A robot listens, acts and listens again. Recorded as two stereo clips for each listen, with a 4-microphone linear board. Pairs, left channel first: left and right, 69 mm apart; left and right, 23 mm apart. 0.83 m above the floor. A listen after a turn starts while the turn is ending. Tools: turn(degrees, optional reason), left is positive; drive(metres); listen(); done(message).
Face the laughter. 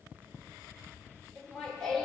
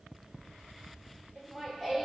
turn(degrees=30)
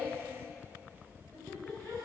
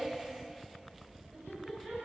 turn(degrees=160, reason="So it is at 160° left.")
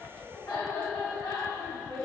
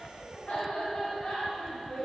turn(degrees=75, reason="The laughter is now 75° left.")
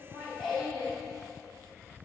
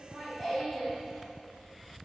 done("Found it: laughter, straight ahead, over 4 m away.")